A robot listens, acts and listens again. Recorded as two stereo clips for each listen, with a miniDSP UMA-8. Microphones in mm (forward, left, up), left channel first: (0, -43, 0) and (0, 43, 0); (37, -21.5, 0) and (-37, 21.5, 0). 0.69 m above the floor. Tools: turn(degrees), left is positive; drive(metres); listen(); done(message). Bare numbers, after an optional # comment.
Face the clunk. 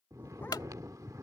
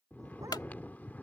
# The clunk: 60° right.
turn(-60)
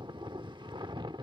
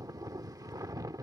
done("I heard a clunk from this way, but can't make it out now.")